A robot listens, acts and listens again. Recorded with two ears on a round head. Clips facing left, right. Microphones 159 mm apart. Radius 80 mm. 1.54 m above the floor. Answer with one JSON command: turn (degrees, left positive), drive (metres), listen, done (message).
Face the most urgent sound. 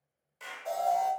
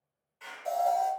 {"turn": -30}
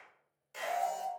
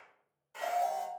{"turn": -115}
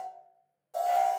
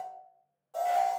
{"turn": 20}
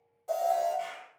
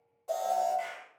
{"done": "Facing the alarm, 1 to 2 m away."}